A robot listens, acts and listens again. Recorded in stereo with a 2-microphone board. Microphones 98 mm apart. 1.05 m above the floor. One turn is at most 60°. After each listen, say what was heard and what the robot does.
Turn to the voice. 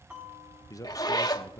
The man speaking: about 35° left or 145° left. Turn 35° left.
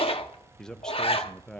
So it is at 10° left. Turn 10° left.
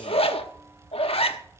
Keep listening.
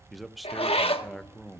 Facing the man speaking, under 1 m away.